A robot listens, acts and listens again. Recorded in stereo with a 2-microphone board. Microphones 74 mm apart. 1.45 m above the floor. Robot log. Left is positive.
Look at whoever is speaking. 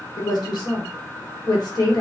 note: The woman speaking: about 70° left or 110° left.
cmd yaw +70
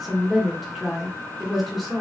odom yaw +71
end: Facing the woman speaking, 1 to 2 m away.